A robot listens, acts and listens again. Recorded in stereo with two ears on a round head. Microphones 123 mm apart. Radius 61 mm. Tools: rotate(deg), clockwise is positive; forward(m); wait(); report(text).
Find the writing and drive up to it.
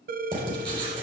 rotate(35)
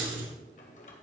rotate(110)
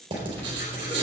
rotate(35)
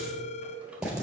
forward(1.0)
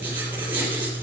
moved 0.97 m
rotate(15)
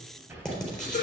forward(1.0)
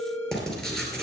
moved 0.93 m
forward(1.0)
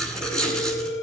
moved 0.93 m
forward(1.0)
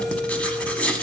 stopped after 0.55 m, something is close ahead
rotate(-10)
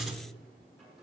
report("Arrived at the writing, straight ahead.")